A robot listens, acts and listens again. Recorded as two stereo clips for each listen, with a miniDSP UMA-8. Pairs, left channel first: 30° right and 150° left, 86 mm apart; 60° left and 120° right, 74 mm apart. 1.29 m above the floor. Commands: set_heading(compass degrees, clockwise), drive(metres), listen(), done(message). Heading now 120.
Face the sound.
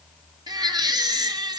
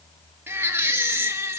set_heading(300)
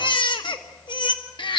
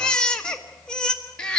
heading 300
set_heading(320)
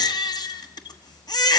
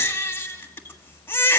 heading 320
done("Found it: a baby crying, straight ahead, 1 to 2 m away.")